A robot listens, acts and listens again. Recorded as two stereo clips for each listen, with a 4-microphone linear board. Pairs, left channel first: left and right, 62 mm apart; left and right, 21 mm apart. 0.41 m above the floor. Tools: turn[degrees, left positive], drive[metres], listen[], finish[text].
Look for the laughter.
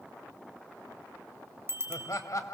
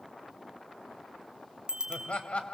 Thought: The laughter: about 65° left or 115° left.
Action: turn[65]
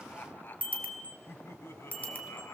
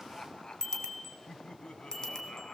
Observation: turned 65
Thought: So it is at 45° left.
Action: turn[45]
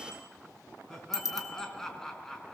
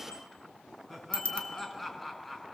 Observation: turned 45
Thought: The laughter is now 10° left.
Action: turn[10]
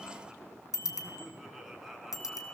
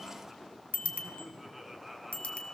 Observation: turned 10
Action: finish[Found it: laughter, straight ahead, 2 to 4 m away.]